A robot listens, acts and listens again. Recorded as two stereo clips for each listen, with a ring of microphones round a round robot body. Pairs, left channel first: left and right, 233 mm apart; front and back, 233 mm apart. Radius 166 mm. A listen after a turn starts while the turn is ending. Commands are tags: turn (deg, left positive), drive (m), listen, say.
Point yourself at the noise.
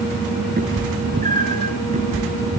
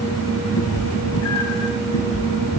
<turn deg="-25"/>
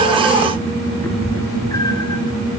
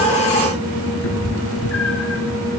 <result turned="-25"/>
<turn deg="15"/>
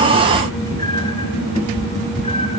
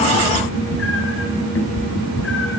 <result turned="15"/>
<turn deg="25"/>
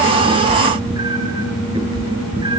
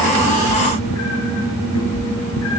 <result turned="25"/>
<turn deg="-20"/>
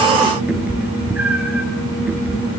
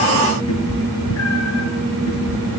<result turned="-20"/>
<say>Facing the cat meowing, 2 to 4 m away.</say>